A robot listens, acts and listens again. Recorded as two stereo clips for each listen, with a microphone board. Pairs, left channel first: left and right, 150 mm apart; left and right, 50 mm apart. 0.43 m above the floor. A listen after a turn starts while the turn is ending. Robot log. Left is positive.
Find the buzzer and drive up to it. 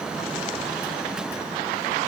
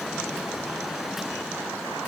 cmd idle
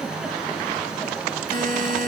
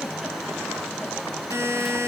note: The buzzer: about 70° right or 110° right.
cmd yaw -70
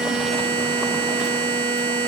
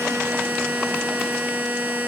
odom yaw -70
note: So it is at 35° right.
cmd yaw -35
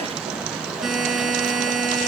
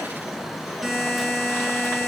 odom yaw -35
cmd fwd 1.0
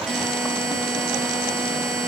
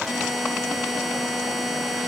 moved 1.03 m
cmd fwd 1.0
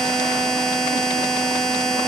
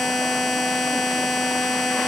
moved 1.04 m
cmd fwd 1.0
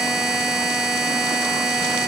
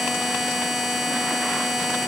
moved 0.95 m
cmd fwd 1.0
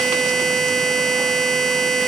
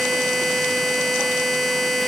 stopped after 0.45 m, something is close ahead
end: I am next to the buzzer.